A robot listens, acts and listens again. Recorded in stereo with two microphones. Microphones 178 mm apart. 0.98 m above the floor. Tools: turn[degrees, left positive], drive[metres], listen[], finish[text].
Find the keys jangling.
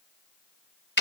Action: listen[]
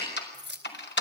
Action: turn[-90]
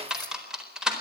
Action: listen[]
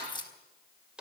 Thought: The keys jangling is now 25° left.
Action: turn[25]
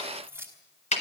Thought: The keys jangling is now 15° right.
Action: turn[-15]
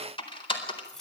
Action: finish[Facing the keys jangling, over 4 m away.]